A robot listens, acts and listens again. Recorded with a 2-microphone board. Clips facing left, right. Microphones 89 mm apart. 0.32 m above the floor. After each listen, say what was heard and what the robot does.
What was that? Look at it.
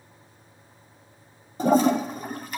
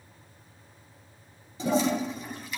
The toilet flushing: about 50° left or 130° left. Turn 50° left.
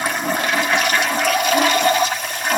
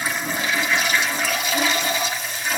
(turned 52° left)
So it is at 70° left. Turn 70° left.
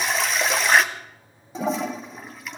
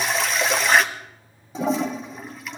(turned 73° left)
Found it: a toilet flushing, straight ahead.